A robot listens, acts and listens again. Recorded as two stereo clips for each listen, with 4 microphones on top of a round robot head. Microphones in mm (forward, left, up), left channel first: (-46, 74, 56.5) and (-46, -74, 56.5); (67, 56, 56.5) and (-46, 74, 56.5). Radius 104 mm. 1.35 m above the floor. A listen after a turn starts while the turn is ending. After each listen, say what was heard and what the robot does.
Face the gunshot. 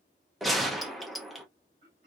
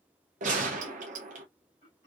The gunshot: straight behind. Turn 180° left.
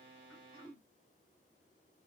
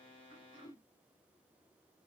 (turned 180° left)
Facing where the gunshot came from. I can't hear it now.